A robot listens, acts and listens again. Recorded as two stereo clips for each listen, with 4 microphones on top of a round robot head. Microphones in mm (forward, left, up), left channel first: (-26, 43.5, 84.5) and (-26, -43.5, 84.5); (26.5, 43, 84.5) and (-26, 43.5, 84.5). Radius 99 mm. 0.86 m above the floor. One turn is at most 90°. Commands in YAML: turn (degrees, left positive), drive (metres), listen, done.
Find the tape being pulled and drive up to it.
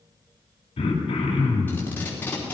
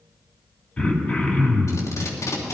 turn: 20
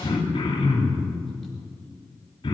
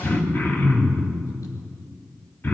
listen: true
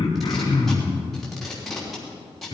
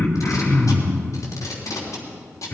drive: 1.0
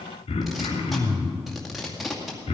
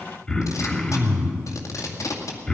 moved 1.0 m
drive: 1.0
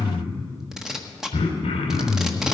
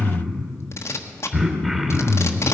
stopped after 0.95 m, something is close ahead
done: "Arrived at the tape being pulled, straight ahead."